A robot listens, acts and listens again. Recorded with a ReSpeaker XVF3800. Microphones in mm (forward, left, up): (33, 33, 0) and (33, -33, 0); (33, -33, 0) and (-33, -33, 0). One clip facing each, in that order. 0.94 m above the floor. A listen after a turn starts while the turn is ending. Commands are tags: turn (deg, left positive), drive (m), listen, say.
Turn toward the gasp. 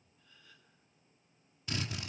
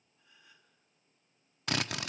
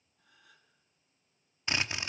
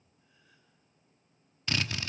<turn deg="-20"/>
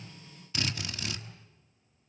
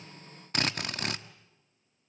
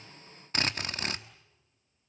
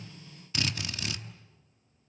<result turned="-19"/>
<say>Facing where the gasp came from. I can't hear it now.</say>